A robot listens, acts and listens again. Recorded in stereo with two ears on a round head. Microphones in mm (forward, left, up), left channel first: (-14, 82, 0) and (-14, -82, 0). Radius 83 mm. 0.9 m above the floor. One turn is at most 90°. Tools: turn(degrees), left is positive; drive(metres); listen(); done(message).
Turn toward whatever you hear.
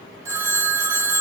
turn(degrees=-20)
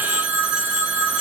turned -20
turn(degrees=-90)
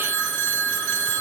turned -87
turn(degrees=-55)
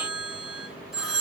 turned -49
done("Found it: a phone ringing, straight ahead.")